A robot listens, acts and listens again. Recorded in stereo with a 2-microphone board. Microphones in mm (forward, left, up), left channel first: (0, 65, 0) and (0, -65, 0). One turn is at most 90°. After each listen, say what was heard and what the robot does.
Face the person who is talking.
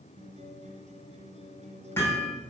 Keep listening.
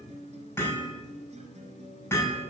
Keep listening.
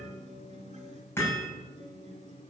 I can't make out anyone speaking to turn to.